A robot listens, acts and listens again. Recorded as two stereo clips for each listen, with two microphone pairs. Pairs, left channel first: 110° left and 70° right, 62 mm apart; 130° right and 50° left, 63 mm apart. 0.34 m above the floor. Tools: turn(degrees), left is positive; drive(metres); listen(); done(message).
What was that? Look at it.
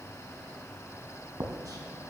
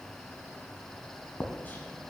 turn(degrees=-75)
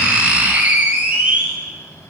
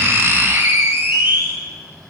done("Facing the writing.")